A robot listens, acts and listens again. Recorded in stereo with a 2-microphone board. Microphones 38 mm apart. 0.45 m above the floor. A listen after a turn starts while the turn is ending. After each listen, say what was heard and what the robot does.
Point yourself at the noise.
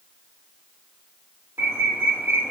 Turn 90° right.
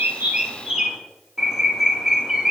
So it is at 15° right. Turn 15° right.
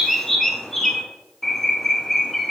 Found it: a bird, straight ahead.